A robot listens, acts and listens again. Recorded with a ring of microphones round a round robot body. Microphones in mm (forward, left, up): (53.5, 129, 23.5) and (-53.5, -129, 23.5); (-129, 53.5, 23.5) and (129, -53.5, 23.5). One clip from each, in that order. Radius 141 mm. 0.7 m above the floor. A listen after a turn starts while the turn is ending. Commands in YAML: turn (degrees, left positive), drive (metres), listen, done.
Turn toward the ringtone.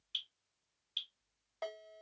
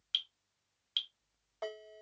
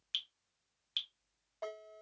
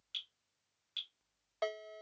done: "Found it: a ringtone, straight ahead."